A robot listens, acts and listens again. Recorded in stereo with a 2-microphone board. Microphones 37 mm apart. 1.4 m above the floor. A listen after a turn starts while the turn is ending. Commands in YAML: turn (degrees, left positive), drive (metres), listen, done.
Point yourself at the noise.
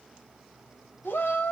turn: 90
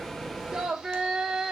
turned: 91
turn: -15
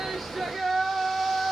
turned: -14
done: "Facing the shout, 1 to 2 m away."